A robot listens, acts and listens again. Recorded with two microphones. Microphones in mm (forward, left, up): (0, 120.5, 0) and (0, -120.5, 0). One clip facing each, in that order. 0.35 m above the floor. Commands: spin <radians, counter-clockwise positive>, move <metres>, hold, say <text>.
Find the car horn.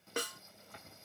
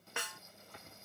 hold
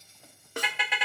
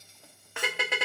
spin -0.87
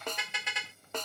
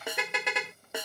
spin -1.31
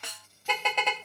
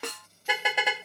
spin -0.17
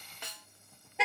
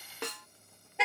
say Found it: a car horn, straight ahead.